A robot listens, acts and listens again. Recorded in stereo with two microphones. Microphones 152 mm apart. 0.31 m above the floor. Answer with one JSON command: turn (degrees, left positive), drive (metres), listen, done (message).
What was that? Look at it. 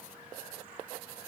{"listen": true}
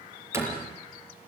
{"turn": -15}
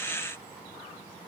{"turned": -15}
{"listen": true}
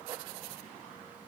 {"done": "I heard a door slam, but can't make it out now. It was about straight ahead or 150° right."}